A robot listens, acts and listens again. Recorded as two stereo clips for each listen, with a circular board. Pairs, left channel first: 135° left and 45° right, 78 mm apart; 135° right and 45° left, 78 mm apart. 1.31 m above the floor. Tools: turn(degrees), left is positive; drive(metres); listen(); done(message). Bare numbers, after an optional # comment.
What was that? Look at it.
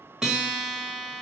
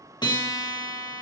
# The guitar: 125° right.
turn(-125)
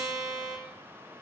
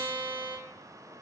done("Found it: a guitar, straight ahead, 1 to 2 m away.")